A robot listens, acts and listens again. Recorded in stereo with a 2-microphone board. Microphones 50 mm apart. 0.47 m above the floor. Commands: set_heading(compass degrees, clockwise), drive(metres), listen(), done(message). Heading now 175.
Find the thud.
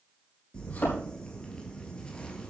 set_heading(135)
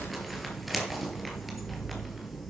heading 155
listen()
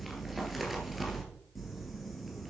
done("I heard a thud, but can't make it out now. It was about 20° left or 120° left.")